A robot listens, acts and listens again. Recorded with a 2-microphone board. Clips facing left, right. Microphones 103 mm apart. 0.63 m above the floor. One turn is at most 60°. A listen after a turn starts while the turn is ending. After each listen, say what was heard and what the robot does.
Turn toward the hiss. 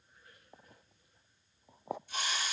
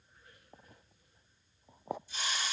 The hiss: about 60° left or 120° left. Turn 60° left.
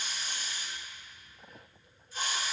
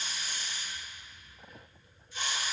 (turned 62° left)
So it is at 45° left. Turn 45° left.
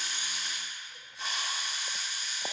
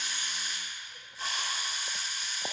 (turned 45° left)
Facing the hiss.